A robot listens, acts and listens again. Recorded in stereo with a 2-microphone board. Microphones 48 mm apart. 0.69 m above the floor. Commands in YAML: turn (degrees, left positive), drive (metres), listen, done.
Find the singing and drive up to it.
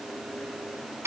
listen: true
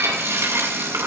listen: true
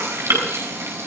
done: "I can't make out singing to turn to."